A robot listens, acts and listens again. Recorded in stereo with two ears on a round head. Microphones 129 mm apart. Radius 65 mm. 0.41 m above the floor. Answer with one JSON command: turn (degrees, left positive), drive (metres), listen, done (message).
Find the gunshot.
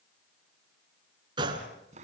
{"turn": -30}
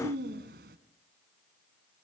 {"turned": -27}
{"listen": true}
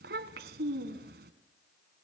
{"done": "I heard a gunshot, but can't make it out now. It was about 5° right or 125° right."}